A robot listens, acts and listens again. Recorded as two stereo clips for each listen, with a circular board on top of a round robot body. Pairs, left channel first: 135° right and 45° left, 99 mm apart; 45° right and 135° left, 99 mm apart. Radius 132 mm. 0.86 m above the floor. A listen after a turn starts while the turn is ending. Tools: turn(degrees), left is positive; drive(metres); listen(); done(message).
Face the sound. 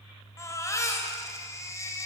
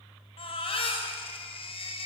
turn(degrees=-75)
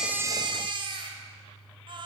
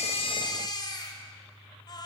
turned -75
done("Found it: a baby crying, straight ahead.")